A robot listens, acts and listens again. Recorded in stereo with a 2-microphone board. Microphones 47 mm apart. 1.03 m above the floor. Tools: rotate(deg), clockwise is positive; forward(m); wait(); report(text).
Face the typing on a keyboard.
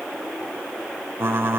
rotate(50)
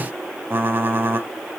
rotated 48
rotate(60)
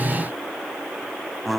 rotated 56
report("Found it: typing on a keyboard, straight ahead, 1 to 2 m away.")